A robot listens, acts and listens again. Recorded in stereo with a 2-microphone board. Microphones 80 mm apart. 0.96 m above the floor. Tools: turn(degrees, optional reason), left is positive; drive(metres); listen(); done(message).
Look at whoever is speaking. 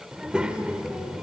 turn(degrees=-30)
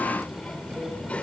turn(degrees=15, reason="So it is at 15° left.")
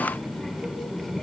turn(degrees=10, reason="The child speaking is now 10° left.")
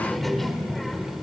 done("Facing the child speaking.")